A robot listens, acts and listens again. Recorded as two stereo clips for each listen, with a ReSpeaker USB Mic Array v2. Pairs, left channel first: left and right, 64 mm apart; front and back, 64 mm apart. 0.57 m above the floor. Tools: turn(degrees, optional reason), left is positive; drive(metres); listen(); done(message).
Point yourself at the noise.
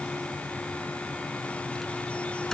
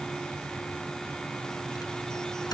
done("Found it: a microwave, straight ahead.")